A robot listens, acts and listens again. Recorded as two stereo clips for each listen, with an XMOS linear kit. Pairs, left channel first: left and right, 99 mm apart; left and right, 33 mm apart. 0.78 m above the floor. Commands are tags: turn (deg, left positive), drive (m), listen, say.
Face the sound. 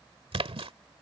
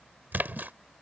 <turn deg="-75"/>
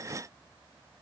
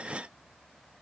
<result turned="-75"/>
<listen/>
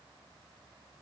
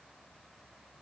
<say>I heard a splash, but can't make it out now. It was about straight ahead or 30° right.</say>